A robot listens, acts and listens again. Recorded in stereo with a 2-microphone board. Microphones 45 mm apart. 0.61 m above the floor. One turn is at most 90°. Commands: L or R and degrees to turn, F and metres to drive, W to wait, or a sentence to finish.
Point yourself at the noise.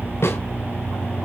L65
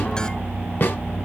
L50
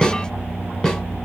L20
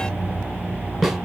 Found it: a snare drum, straight ahead, 2 to 4 m away.